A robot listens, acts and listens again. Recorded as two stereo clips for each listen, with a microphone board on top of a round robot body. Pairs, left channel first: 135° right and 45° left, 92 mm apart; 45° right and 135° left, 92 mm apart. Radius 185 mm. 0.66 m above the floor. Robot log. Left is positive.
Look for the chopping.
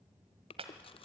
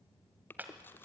note: The chopping: 65° left.
cmd yaw +65
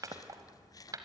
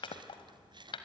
note: The chopping is now 10° right.
cmd yaw -10
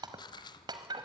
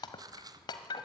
end: Found it: chopping, straight ahead.